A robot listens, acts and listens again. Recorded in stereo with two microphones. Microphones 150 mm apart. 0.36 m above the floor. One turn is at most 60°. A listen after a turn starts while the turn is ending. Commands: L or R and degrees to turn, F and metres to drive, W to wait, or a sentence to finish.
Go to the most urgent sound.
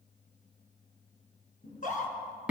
L60
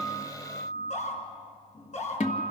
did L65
L55
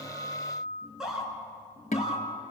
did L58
F1.0
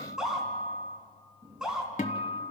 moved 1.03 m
F1.0
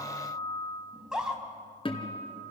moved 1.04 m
F1.0
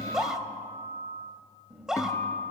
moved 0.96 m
F1.0
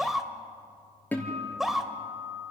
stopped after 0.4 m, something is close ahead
I am next to the scream.